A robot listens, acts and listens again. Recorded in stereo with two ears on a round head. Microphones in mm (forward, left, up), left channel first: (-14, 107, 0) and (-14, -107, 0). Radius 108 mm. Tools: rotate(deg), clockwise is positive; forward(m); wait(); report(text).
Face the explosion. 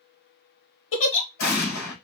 rotate(-40)
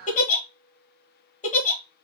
wait()
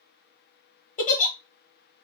report("I heard an explosion, but can't make it out now. It was about straight ahead or 100° left.")